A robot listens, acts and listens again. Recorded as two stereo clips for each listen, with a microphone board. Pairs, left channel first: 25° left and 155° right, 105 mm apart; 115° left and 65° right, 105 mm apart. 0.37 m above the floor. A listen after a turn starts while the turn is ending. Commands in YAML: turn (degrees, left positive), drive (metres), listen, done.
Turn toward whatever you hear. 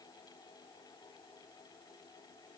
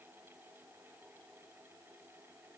listen: true
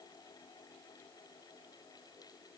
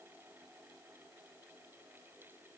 listen: true
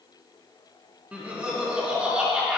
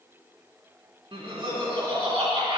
turn: -80
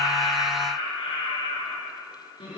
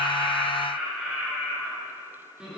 turn: 10
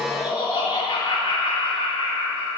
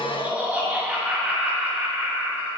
done: "Found it: laughter, straight ahead."